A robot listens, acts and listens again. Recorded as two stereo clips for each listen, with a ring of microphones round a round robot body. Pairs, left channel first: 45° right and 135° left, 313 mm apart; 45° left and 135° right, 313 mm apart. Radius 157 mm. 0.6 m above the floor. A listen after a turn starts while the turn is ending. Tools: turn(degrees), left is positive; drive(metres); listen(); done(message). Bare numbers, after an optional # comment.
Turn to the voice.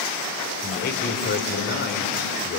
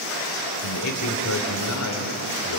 # The man speaking: 10° left.
turn(10)
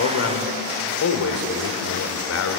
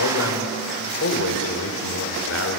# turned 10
done("Facing the man speaking.")